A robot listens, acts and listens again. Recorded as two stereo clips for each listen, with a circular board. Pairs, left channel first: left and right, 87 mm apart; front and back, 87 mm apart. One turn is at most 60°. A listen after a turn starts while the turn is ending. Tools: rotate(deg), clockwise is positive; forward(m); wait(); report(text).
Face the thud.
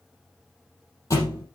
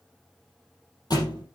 rotate(-40)
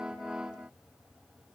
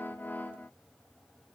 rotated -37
report("I heard a thud from this way, but can't make it out now.")